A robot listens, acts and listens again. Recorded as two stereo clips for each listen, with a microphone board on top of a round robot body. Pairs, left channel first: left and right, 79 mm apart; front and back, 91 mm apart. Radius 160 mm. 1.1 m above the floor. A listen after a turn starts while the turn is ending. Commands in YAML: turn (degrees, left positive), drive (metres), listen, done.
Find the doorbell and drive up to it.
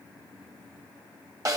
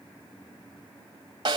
listen: true
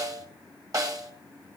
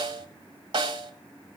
listen: true
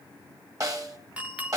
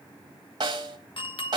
turn: -20
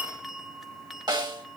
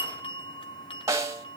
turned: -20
drive: 1.0
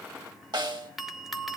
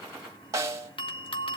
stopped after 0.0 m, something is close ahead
done: "Blocked. The doorbell is further on, straight ahead."